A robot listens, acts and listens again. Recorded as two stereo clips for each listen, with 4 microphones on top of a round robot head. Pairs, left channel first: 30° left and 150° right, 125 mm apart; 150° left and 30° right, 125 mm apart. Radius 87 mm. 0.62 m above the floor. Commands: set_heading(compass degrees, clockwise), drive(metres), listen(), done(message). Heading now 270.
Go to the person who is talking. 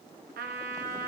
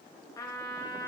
listen()
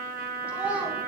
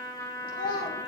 set_heading(140)
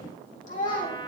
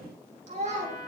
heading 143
drive(1.0)
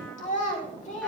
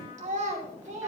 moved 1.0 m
drive(1.0)
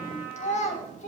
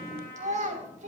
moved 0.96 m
drive(1.0)
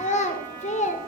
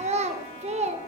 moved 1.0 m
drive(1.0)
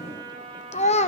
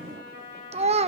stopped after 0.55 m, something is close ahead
done("I am next to the child speaking.")